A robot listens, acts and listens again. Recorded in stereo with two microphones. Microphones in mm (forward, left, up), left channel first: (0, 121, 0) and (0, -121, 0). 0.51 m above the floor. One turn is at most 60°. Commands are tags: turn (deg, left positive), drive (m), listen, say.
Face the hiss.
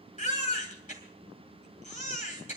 <listen/>
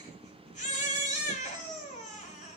<listen/>
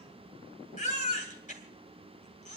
<say>I can't make out a hiss to turn to.</say>